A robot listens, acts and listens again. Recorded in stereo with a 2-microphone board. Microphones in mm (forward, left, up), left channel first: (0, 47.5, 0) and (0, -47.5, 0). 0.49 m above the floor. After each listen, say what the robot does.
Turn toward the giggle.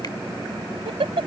Turn 90° right.
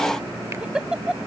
Turn 10° right.
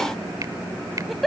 Facing the giggle.